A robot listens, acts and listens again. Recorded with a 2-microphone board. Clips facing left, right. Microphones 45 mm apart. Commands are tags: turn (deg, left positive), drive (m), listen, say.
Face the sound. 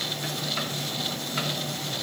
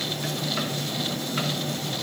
<listen/>
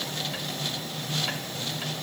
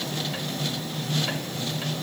<listen/>
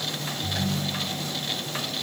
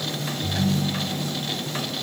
<turn deg="-70"/>
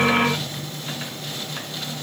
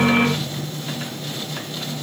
<listen/>
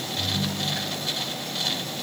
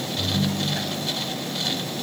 <say>Facing the ringtone.</say>